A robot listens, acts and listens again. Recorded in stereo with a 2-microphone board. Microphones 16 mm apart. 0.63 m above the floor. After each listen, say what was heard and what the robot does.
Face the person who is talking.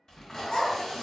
The child speaking: about 60° left or 120° left. Turn 60° left.
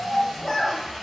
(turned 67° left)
So it is at 50° left. Turn 50° left.
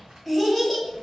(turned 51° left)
Found it: a child speaking, straight ahead, 1 to 2 m away.